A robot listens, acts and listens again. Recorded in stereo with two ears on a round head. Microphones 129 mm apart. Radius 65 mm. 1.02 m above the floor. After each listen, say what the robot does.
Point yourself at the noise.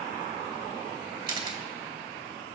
Turn 35° right.
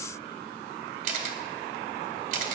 Turn 110° right.
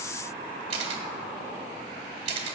Turn 45° right.
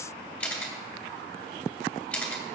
Turn 10° left.
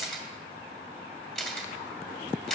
Found it: a camera shutter, straight ahead, 1 to 2 m away.